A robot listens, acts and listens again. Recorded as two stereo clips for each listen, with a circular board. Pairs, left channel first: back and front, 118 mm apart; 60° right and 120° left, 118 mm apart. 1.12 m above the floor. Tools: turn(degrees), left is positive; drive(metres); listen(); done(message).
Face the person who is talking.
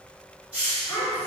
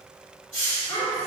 turn(degrees=-110)
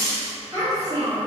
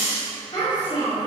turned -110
turn(degrees=-55)
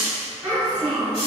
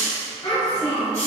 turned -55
turn(degrees=-35)
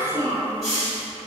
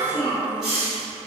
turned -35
done("Facing the child speaking.")